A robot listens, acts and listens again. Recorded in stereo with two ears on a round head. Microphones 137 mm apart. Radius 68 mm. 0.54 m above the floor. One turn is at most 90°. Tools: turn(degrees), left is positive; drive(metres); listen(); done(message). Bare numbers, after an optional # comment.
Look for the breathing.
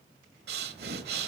# The breathing: about 75° right or 105° right.
turn(-75)
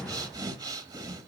# So it is at 25° right.
turn(-25)
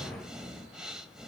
done("Found it: breathing, straight ahead, 1 to 2 m away.")